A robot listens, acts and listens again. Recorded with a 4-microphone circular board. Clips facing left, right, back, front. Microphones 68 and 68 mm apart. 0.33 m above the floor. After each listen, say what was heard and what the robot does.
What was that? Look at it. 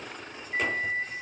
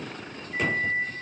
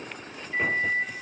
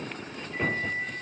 The microwave: 145° left. Turn 145° left.
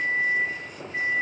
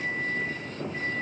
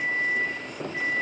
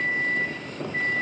The microwave is now 45° left. Turn 45° left.
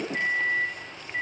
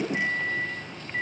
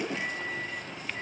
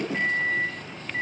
Found it: a microwave, straight ahead.